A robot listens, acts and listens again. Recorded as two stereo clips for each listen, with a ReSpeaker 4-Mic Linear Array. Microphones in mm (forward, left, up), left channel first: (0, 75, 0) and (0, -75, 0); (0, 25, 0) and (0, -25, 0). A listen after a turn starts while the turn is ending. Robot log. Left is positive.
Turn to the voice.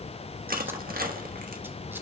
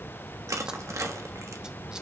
cmd idle
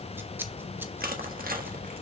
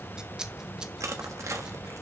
cmd idle
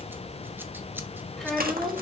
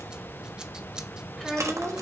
cmd yaw +30
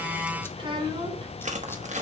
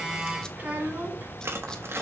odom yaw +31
note: So it is at 35° right.
cmd yaw -35
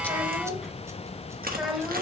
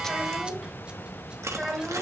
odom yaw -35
end: Found it: a child speaking, straight ahead.